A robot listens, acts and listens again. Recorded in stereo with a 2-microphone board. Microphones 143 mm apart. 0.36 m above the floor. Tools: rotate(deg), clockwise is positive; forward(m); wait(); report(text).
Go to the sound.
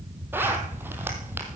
rotate(30)
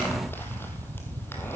wait()
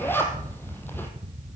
rotate(-15)
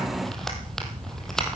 forward(1.0)
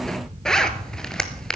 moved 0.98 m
forward(1.0)
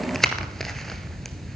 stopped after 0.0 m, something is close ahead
report("Arrived at the zipper, straight ahead.")